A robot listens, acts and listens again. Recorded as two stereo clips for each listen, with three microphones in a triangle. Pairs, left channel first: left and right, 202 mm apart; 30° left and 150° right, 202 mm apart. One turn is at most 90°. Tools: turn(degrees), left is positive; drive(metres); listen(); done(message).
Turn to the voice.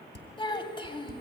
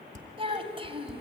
turn(degrees=90)
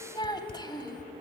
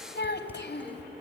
turn(degrees=25)
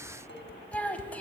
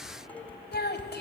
turn(degrees=10)
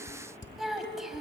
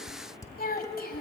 done("Facing the child speaking.")